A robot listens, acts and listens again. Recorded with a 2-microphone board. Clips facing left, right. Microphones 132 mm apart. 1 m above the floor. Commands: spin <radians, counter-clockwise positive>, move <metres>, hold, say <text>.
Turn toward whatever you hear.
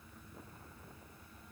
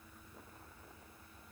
hold
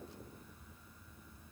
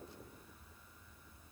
hold
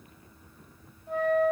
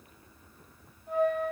spin -0.52
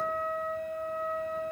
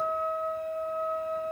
spin 0.44
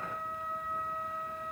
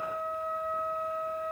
say Found it: a flute, straight ahead, 1 to 2 m away.